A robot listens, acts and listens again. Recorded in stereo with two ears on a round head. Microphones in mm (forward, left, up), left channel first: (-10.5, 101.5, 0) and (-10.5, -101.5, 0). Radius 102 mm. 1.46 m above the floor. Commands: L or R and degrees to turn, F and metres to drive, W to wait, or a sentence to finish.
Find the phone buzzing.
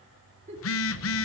L65
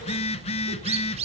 L30
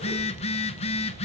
L30
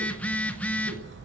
Facing the phone buzzing, under 1 m away.